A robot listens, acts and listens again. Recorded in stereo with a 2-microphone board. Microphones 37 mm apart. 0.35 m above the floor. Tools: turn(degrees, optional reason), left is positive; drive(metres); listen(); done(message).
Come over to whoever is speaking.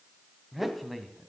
turn(degrees=30)
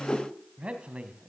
turn(degrees=-35, reason="So it is at 35° right.")
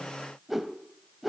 listen()
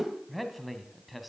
drive(metres=1.0)
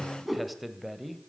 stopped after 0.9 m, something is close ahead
done("I am next to the man speaking.")